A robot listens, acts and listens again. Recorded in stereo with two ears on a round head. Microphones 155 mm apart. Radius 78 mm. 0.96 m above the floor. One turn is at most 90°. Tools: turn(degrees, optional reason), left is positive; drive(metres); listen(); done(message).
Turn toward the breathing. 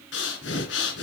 turn(degrees=90)
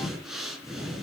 done("Facing the breathing.")